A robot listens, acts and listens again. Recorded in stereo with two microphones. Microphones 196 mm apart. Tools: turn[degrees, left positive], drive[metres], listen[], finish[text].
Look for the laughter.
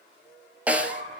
Thought: The laughter: about 40° right or 140° right.
Action: turn[-40]
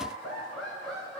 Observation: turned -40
Action: finish[Found it: laughter, straight ahead.]